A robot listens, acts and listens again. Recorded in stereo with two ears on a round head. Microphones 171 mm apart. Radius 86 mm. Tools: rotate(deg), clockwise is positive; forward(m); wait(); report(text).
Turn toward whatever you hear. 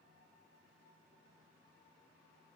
wait()
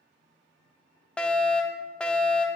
rotate(-30)
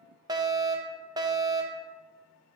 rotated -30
rotate(25)
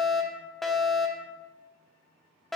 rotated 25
report("Found it: a fire alarm, straight ahead.")